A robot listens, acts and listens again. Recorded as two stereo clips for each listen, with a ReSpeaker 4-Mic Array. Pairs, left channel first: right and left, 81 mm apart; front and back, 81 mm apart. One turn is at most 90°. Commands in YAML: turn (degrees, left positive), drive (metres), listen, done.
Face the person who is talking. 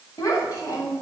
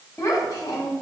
turn: -50
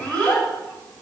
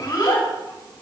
turn: -20
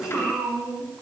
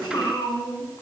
done: "Found it: a child speaking, straight ahead."